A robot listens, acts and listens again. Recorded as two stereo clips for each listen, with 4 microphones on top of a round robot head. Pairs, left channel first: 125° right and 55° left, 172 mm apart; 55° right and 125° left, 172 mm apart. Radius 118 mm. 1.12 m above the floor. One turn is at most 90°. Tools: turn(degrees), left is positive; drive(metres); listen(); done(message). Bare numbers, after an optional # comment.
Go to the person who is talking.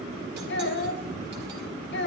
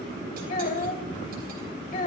# The child speaking: 95° right.
turn(-90)
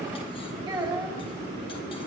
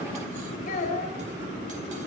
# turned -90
drive(1.0)
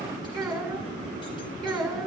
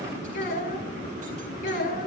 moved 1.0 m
# The child speaking is now 15° right.
turn(-15)
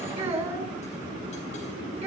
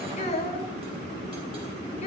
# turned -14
drive(1.0)
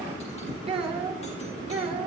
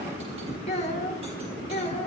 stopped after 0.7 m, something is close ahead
done("Something is in my way. I am facing the child speaking but have not reached it.")